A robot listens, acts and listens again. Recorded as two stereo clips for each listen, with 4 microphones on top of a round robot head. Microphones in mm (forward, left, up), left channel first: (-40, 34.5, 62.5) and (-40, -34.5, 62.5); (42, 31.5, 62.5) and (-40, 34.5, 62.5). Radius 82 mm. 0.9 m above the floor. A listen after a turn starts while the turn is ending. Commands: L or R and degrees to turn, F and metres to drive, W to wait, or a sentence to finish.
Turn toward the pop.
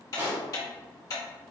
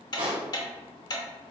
R140
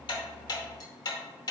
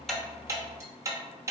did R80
R60
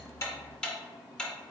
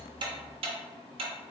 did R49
R10
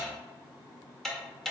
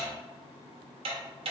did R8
I heard a pop from this way, but can't make it out now.